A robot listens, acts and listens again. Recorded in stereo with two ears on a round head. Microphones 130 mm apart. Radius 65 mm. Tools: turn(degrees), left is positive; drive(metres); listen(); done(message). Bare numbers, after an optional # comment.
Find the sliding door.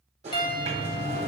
# The sliding door: about 45° right or 135° right.
turn(-45)
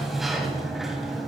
done("Facing the sliding door, 1 to 2 m away.")